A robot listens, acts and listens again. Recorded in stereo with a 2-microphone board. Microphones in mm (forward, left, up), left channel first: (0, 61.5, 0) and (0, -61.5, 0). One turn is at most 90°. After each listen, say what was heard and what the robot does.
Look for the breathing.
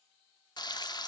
Keep listening.
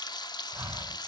The breathing: about 20° right or 160° right. Turn 20° right.
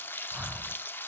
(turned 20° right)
Facing the breathing.